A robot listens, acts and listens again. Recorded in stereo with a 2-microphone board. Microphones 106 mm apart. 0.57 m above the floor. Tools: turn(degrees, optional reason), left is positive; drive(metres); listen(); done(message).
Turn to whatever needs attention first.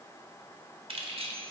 listen()
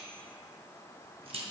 listen()
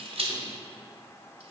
done("I can't make out anything urgent, only keys jangling.")